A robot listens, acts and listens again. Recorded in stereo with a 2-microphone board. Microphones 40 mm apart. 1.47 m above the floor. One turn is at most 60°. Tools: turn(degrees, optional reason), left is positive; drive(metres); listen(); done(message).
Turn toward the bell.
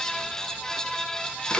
listen()
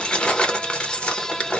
listen()
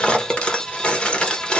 done("I can't make out a bell to turn to.")